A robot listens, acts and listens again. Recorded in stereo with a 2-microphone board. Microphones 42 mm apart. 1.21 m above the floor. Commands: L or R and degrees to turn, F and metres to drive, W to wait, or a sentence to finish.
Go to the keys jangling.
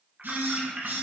R25
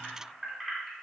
F1.0
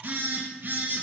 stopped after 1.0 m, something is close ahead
W
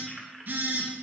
Arrived at the keys jangling, straight ahead.